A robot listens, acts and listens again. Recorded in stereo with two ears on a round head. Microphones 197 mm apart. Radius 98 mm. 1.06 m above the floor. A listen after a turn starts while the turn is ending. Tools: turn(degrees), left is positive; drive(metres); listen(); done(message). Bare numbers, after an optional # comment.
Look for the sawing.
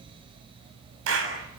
listen()
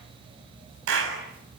listen()
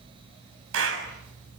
done("I can't make out sawing to turn to.")